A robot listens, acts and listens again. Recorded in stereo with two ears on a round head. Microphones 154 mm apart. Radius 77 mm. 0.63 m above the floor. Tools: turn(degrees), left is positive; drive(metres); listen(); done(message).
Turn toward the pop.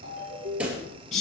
turn(degrees=-30)
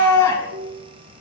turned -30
listen()
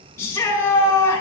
done("I heard a pop, but can't make it out now. It was about 25° left or 145° right.")